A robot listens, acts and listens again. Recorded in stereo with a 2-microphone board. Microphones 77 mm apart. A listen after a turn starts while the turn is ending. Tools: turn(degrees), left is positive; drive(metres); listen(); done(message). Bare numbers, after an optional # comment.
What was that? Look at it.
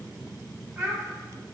# The child speaking: about 30° right or 150° right.
turn(-30)
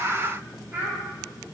# The child speaking: about 25° right or 155° right.
turn(-25)
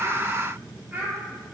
# The child speaking: about 25° right or 155° right.
turn(-25)
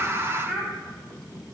# So it is at 10° right.
turn(-10)
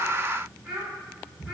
# The child speaking is now 10° right.
turn(-10)
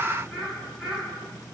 done("Facing the child speaking.")